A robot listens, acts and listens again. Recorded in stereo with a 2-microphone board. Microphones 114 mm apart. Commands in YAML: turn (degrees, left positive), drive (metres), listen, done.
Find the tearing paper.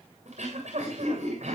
listen: true
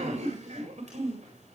listen: true
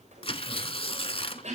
turn: 55
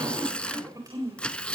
turn: 10
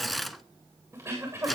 done: "Facing the tearing paper."